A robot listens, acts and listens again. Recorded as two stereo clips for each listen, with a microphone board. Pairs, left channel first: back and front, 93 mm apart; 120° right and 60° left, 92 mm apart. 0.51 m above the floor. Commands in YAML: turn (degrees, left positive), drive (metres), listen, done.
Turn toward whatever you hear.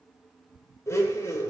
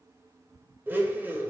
turn: 125
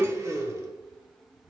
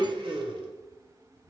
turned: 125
turn: 55
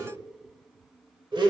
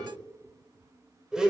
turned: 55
turn: -20
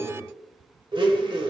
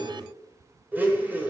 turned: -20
done: "Found it: a blender, straight ahead."